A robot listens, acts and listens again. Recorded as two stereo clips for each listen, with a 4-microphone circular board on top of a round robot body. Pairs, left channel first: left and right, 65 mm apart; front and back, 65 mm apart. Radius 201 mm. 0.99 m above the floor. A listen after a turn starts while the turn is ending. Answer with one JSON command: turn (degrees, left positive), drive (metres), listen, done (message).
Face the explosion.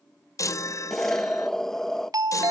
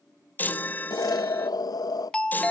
{"done": "Facing the explosion, under 1 m away."}